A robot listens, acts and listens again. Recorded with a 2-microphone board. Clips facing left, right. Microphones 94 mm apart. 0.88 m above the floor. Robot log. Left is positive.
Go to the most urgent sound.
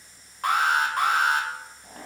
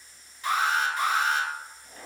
note: The alarm: about 60° left or 120° left.
cmd yaw +60
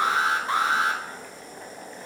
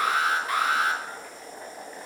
note: So it is at 35° left.
cmd yaw +35
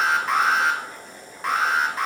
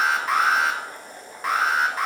cmd fwd 1.0
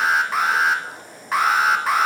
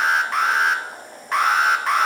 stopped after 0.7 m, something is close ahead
end: Arrived at the alarm, straight ahead.